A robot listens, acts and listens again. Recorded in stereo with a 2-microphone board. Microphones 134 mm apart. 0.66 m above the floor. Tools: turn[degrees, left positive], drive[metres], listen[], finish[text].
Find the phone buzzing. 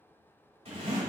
Action: listen[]
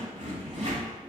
Action: listen[]
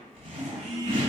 Thought: The phone buzzing: about 55° right or 125° right.
Action: turn[-55]
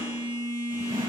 Thought: So it is at 15° right.
Action: turn[-15]
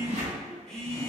Action: finish[Found it: a phone buzzing, straight ahead, 1 to 2 m away.]